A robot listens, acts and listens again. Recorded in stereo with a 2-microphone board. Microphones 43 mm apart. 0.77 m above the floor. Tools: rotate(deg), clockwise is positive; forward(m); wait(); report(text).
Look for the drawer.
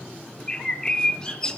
wait()
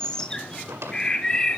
rotate(90)
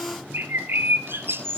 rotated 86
wait()
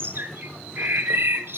wait()
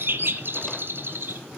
report("Facing where the drawer came from. I can't hear it now.")